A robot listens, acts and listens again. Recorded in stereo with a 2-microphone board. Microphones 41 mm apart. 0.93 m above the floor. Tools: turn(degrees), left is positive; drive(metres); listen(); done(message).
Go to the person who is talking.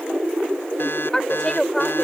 turn(degrees=30)
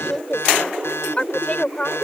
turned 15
turn(degrees=150)
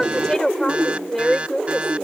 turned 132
turn(degrees=20)
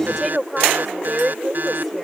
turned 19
drive(metres=1.0)
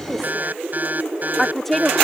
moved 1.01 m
turn(degrees=10)
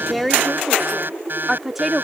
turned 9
drive(metres=1.0)
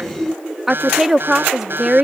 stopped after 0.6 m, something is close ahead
done("Arrived at the woman speaking, straight ahead.")